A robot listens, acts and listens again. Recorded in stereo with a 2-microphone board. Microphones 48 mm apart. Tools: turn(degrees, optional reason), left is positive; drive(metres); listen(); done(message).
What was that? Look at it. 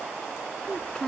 turn(degrees=20, reason="The child speaking: about 20° left or 160° left.")
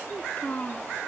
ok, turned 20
turn(degrees=35, reason="The child speaking: about 35° left or 145° left.")
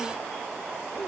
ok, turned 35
listen()
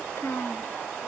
turn(degrees=115, reason="So it is at 115° left.")
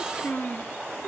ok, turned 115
turn(degrees=35, reason="The child speaking is now 35° left.")
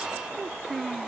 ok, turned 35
done("Found it: a child speaking, straight ahead.")